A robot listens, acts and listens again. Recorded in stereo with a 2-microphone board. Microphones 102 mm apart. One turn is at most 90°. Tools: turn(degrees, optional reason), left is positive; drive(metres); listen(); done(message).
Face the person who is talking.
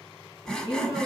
turn(degrees=-55, reason="The woman speaking: about 55° right or 125° right.")
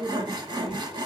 turn(degrees=-55, reason="So it is at 55° right.")
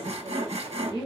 turn(degrees=-40, reason="The woman speaking is now 40° right.")
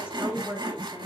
turn(degrees=-20, reason="The woman speaking is now 20° right.")
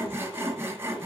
listen()
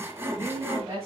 turn(degrees=-25, reason="The woman speaking is now 25° right.")
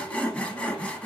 listen()
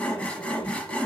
listen()
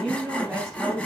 done("Found it: a woman speaking, straight ahead, 2 to 4 m away.")